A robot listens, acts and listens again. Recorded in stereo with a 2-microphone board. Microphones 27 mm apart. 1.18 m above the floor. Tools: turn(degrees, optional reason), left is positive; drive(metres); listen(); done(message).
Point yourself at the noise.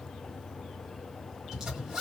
turn(degrees=-25, reason="The zipper: about 25° right or 155° right.")
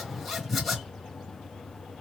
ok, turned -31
done("Found it: a zipper, straight ahead, 1 to 2 m away.")